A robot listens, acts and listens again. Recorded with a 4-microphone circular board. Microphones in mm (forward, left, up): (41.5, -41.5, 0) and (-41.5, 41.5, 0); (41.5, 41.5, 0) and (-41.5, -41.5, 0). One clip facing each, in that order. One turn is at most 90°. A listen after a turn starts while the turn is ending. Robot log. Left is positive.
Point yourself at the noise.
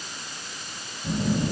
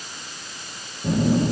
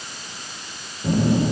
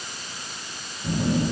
note: The phone buzzing: 95° left.
cmd yaw +90
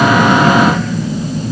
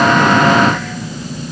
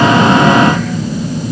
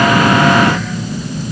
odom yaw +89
end: Found it: a phone buzzing, straight ahead.